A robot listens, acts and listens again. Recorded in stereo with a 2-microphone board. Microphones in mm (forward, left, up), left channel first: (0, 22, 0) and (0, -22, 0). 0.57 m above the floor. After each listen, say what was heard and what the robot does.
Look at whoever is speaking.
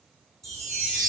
Keep listening.
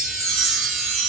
Keep listening.
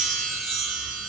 I can't make out anyone speaking, only a chime.